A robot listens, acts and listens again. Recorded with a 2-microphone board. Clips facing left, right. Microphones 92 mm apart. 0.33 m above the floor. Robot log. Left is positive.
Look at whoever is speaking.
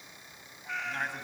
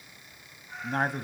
note: The man speaking: about 40° right or 140° right.
cmd yaw -40
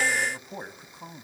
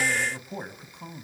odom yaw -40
end: Facing the man speaking, 1 to 2 m away.